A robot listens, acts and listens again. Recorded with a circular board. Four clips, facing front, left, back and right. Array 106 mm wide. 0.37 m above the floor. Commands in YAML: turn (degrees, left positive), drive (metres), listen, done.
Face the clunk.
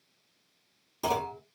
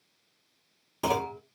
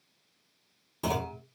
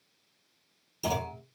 turn: 85
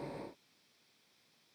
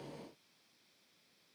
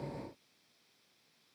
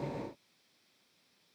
done: "Facing where the clunk came from. I can't hear it now."